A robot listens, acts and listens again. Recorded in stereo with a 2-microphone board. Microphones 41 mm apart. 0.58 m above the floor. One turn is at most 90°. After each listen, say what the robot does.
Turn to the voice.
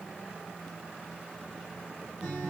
Keep listening.
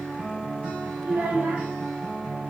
Turn 55° right.
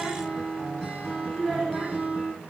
Facing the child speaking, 1 to 2 m away.